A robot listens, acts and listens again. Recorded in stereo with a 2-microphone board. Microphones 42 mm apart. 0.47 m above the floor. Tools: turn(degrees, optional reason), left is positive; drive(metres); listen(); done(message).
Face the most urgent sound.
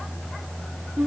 listen()
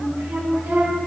listen()
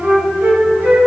done("I can't make out anything urgent, only a flute.")